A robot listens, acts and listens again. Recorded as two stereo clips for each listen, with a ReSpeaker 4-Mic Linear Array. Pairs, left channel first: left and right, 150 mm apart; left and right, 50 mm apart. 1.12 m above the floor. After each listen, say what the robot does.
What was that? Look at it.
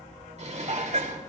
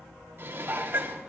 Turn 50° right.
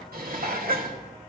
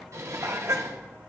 Turn 80° right.
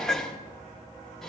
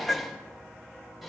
Facing the dishes clattering.